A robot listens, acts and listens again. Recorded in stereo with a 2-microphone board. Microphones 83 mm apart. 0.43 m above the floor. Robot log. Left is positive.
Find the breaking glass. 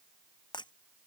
note: The breaking glass: about 65° left or 115° left.
cmd yaw +65
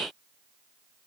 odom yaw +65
cmd idle
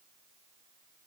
end: I heard breaking glass, but can't make it out now. It was about straight ahead or 50° left.